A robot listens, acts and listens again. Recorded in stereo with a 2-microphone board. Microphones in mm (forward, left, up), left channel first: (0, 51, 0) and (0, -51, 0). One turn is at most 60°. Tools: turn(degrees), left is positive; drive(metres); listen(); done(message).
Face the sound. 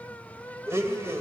turn(degrees=-25)
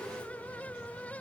listen()
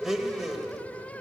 done("Facing the blender, 2 to 4 m away.")